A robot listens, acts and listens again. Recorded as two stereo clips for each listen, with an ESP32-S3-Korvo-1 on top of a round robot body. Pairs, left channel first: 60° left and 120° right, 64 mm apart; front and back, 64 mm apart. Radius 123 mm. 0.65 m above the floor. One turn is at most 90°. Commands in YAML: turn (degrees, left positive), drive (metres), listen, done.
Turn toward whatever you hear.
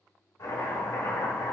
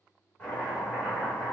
turn: 65
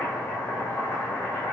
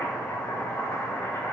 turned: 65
done: "Facing the chopping, 1 to 2 m away."